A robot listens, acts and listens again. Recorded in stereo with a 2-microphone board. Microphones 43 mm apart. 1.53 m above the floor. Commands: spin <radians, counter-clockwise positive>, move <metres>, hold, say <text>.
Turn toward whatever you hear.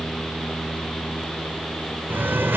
spin -1.13
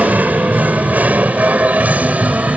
spin -0.61
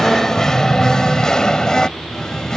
spin 0.26
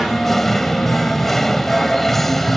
say Found it: singing, straight ahead.